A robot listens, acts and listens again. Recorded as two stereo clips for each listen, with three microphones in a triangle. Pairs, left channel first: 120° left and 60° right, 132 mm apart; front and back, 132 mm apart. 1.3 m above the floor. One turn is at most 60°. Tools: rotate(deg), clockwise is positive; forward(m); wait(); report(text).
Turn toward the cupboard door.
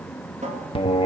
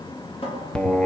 rotate(40)
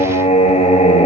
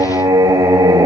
wait()
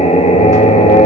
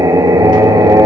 wait()
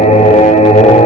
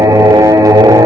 report("I heard a cupboard door from this way, but can't make it out now.")